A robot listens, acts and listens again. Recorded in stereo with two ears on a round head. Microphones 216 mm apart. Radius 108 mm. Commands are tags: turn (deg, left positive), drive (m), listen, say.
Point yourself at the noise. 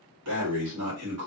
<turn deg="-75"/>
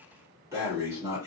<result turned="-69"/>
<turn deg="-15"/>
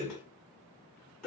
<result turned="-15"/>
<say>Facing the breathing.</say>